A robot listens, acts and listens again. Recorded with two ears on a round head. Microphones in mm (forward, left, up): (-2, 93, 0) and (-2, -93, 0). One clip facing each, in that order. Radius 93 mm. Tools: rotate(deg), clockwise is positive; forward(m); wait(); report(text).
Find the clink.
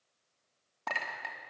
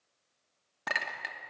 rotate(20)
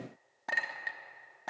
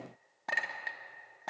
report("Facing the clink.")